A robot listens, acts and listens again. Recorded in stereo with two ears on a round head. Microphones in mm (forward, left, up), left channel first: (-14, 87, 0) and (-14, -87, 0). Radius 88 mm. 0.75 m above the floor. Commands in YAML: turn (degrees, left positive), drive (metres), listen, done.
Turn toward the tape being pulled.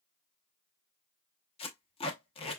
turn: 30
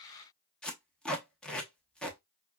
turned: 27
done: "Facing the tape being pulled."